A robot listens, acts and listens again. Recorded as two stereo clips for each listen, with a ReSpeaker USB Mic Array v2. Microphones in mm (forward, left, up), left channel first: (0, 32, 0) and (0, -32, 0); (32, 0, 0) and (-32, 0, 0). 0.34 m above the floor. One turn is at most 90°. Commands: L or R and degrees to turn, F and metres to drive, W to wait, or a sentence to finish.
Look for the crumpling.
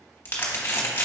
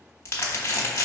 L35
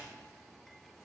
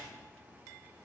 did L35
W
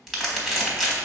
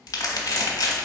Found it: crumpling, straight ahead, 1 to 2 m away.